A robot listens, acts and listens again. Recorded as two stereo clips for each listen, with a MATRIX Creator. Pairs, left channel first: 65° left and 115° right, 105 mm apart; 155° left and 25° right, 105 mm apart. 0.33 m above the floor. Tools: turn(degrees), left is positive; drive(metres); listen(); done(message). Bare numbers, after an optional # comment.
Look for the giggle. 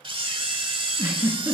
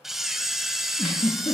# The giggle: straight behind.
turn(180)
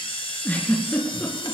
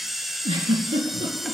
done("Facing the giggle, 2 to 4 m away.")